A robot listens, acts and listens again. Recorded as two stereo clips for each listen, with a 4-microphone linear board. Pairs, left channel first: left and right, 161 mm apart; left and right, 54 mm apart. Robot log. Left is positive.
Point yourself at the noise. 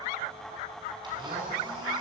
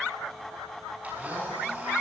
note: The blender: about 25° right or 155° right.
cmd yaw -25
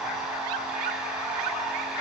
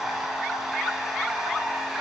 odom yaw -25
end: Found it: a blender, straight ahead.